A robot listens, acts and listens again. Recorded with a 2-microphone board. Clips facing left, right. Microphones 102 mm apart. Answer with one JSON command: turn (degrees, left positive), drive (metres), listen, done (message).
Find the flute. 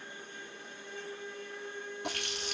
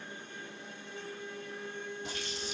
{"turn": 20}
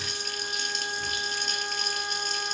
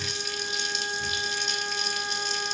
{"done": "Found it: a flute, straight ahead, 1 to 2 m away."}